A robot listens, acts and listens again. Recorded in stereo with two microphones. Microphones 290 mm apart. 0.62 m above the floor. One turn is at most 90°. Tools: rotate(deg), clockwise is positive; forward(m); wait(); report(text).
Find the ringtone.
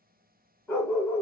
wait()
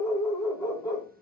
wait()
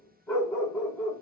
report("I can't make out a ringtone to turn to.")